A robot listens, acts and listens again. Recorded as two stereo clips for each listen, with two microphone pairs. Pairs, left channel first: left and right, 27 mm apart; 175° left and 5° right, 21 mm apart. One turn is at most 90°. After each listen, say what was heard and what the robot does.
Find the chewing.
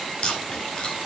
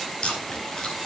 The chewing: 135° left. Turn 90° left.
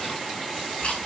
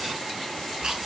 The chewing is now 40° left. Turn 40° left.
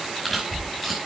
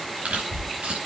Facing the chewing, over 4 m away.